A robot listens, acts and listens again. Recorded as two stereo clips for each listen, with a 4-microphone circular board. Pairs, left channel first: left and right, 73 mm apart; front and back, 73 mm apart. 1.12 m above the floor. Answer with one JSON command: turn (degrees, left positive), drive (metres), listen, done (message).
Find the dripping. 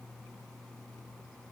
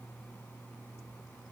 {"listen": true}
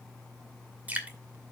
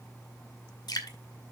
{"turn": -20}
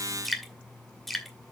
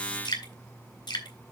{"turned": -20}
{"done": "Found it: dripping, straight ahead."}